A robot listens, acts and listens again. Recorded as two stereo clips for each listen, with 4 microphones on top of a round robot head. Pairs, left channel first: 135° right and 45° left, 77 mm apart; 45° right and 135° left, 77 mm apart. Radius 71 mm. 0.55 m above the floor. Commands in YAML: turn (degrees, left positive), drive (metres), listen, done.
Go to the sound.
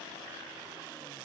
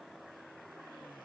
listen: true
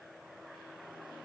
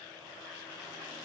listen: true
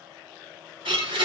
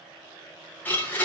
turn: 25
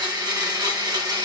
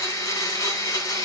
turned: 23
drive: 1.0
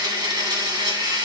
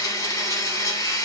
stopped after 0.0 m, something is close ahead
done: "Something is in my way. I am facing the blender but have not reached it."